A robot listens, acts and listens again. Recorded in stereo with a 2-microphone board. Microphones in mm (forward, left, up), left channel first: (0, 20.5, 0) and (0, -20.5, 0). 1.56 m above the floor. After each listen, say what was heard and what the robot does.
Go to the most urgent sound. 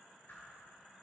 Keep listening.
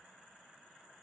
Keep listening.
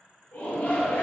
The shout: about 45° left or 135° left. Turn 45° left.
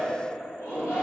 So it is at 90° left. Turn 90° left.
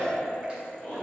The shout is now 25° left. Turn 25° left.
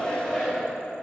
The shout is now 10° left. Turn 10° left.
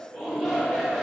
Drive 1.0 m forward.
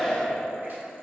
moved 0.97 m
Drive 1.0 m forward.
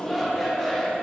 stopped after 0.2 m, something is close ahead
Arrived at the shout, straight ahead.